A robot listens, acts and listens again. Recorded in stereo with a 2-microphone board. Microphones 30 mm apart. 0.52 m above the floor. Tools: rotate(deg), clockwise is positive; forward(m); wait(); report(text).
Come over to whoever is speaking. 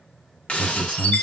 rotate(30)
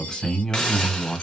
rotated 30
rotate(-20)
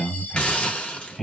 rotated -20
forward(1.0)
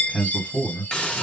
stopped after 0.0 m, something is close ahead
report("Blocked. The man speaking is further on, straight ahead.")